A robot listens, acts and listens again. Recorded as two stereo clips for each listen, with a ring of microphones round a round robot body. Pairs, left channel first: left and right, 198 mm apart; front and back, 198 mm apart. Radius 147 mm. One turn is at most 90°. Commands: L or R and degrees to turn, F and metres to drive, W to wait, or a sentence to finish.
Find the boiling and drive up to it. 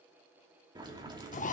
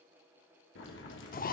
R25
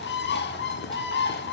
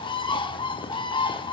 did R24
W
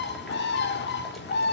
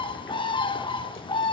W
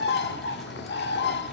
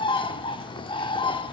Facing where the boiling came from. I can't hear it now. I did not reach it.